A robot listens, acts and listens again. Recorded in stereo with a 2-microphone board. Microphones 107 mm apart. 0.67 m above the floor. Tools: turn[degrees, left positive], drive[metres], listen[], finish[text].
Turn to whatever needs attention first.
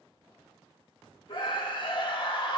Thought: The scream: about 50° left or 130° left.
Action: turn[50]
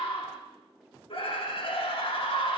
Thought: So it is at 70° left.
Action: turn[70]
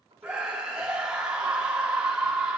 Thought: The scream is now 10° right.
Action: turn[-10]
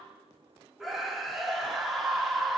Action: finish[Facing the scream.]